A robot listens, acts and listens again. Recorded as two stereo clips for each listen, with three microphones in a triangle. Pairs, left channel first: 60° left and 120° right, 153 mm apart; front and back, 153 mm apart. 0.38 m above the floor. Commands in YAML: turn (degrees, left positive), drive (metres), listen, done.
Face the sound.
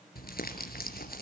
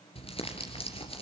turn: 50
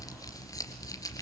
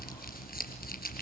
done: "Found it: crumpling, straight ahead."